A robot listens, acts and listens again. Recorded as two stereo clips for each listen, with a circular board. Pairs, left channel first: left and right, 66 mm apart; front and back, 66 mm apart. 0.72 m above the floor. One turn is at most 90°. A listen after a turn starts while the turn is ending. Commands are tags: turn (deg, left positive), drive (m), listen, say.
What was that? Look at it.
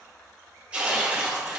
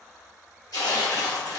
<turn deg="-20"/>
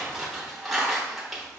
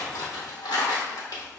<say>Found it: tearing paper, straight ahead.</say>